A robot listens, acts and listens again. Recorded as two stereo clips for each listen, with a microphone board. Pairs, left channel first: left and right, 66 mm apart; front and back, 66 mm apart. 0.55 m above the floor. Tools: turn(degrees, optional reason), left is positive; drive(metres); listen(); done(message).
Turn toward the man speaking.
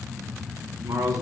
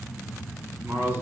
turn(degrees=-120, reason="The man speaking: 120° right.")
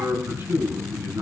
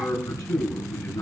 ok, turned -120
turn(degrees=-35, reason="The man speaking is now 35° right.")
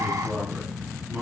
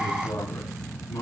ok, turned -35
turn(degrees=-15, reason="The man speaking is now 15° right.")
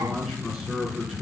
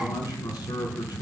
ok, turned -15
done("Facing the man speaking.")